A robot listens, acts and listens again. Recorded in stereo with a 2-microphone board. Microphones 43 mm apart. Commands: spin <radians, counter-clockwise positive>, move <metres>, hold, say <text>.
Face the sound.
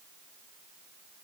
hold
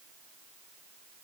hold
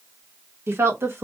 spin -1.22
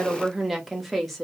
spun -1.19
say Facing the woman speaking.